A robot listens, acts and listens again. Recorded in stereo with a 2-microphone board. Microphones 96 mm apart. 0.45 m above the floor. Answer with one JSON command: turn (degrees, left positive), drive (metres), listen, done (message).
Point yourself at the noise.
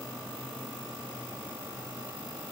{"listen": true}
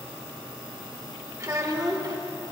{"turn": -45}
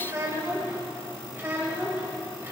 {"turn": -25}
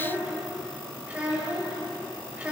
{"turn": -15}
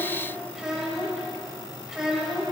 {"done": "Facing the child speaking."}